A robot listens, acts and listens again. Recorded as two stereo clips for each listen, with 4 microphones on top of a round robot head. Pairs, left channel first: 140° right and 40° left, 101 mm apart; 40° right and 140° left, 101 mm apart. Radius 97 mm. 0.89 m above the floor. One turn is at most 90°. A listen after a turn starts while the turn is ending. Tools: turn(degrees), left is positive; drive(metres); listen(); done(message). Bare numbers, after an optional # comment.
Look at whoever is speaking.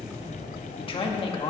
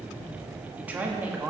# The man speaking: 145° right.
turn(-90)
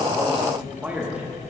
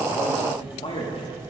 # The man speaking is now 35° right.
turn(-35)
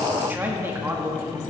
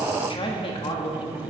# The man speaking is now 30° right.
turn(-30)
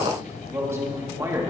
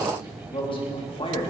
# The man speaking is now 20° right.
turn(-20)
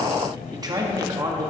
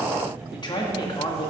done("Facing the man speaking, 1 to 2 m away.")